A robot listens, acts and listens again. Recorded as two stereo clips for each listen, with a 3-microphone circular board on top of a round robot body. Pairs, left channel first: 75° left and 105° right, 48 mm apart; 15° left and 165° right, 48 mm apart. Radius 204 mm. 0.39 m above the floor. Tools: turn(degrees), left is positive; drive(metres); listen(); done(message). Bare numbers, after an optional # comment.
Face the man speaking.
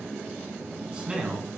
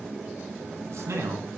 # The man speaking: 175° right.
turn(-175)
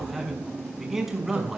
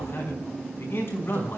# The man speaking is now 25° right.
turn(-25)
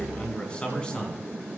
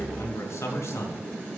done("Found it: a man speaking, straight ahead, over 4 m away.")